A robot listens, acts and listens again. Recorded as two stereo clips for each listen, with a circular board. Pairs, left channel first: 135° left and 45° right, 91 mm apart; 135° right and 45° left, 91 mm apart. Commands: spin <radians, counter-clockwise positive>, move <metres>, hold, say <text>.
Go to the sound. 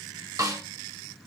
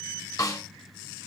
spin -1.57
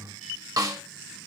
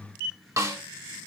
move 1.0
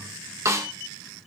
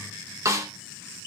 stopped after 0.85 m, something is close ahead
say I am next to the snare drum.